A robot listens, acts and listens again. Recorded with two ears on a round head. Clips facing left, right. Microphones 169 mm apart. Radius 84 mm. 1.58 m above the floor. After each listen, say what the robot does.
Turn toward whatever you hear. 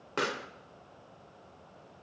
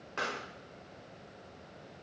Turn 65° left.
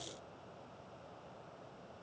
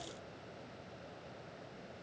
Keep listening.
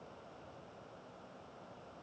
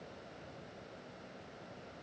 I heard a pop, but can't make it out now. It was about straight ahead or 50° left.